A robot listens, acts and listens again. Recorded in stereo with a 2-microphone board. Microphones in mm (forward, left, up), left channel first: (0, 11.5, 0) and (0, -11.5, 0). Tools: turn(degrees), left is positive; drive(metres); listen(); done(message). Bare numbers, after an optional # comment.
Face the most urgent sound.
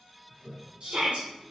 # The shout: about 60° right or 120° right.
turn(-60)
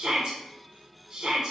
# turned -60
# So it is at 45° right.
turn(-45)
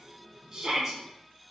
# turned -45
# The shout is now 25° right.
turn(-25)
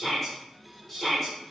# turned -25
# The shout is now 10° left.
turn(10)
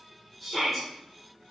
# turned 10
done("Facing the shout.")